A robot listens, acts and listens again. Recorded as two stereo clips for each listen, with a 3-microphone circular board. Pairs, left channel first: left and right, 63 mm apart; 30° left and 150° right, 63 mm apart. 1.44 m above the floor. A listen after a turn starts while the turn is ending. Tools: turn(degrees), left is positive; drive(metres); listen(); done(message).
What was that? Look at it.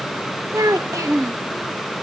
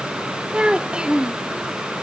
turn(degrees=-75)
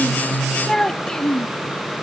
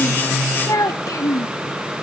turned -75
turn(degrees=15)
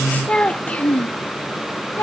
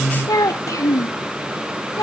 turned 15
turn(degrees=40)
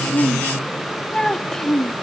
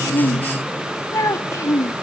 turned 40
turn(degrees=10)
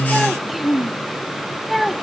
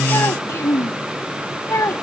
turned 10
done("Facing the child speaking.")